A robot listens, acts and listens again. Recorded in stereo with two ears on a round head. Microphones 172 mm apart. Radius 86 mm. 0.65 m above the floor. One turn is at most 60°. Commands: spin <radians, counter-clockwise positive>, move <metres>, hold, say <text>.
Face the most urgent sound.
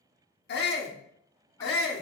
spin 1.05
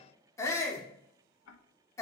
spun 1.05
spin 0.35
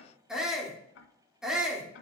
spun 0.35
say Facing the shout.